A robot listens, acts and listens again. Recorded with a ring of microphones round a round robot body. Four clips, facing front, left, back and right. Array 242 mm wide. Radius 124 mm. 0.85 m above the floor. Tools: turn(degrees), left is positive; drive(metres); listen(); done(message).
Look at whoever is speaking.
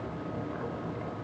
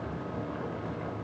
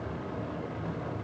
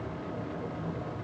listen()
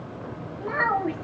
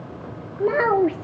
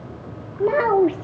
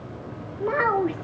turn(degrees=145)
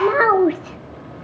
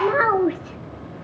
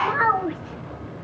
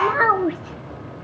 done("Facing the child speaking.")